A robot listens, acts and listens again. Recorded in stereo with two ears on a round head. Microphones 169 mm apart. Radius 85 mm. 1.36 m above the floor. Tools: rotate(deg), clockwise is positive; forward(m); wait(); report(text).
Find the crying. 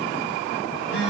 wait()
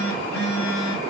wait()
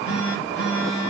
report("I can't make out crying to turn to.")